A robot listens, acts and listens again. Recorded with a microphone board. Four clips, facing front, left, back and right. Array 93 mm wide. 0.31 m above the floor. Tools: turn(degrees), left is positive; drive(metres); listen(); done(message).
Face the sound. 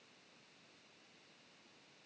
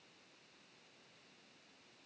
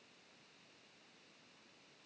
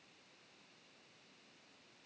listen()
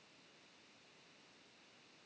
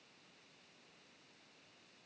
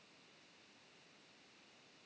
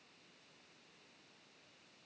listen()
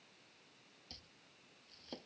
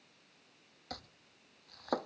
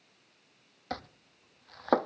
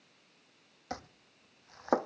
turn(degrees=-155)
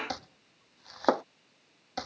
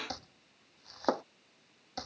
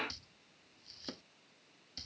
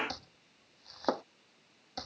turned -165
done("Facing the chopping.")